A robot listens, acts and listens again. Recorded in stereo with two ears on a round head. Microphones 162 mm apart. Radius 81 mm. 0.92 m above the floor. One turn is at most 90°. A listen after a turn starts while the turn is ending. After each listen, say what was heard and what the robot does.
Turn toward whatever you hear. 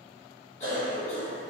The cough: about 40° left or 140° left. Turn 40° left.
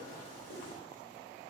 So it is at 100° left. Turn 90° left.
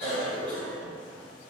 Found it: a cough, straight ahead.